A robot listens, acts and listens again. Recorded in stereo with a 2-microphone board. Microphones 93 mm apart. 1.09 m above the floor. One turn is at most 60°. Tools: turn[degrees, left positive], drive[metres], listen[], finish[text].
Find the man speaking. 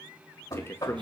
Thought: The man speaking: about 25° left or 155° left.
Action: turn[25]
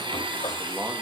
Action: listen[]
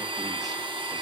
Action: listen[]
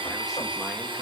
Action: finish[I heard a man speaking, but can't make it out now. It was about straight ahead or 130° left.]